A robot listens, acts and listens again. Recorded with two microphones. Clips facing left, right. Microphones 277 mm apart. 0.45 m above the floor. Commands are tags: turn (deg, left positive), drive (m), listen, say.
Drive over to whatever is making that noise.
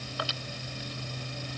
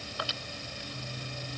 <listen/>
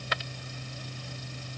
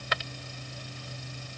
<listen/>
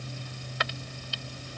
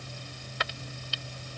<say>I can't make out anything to turn to.</say>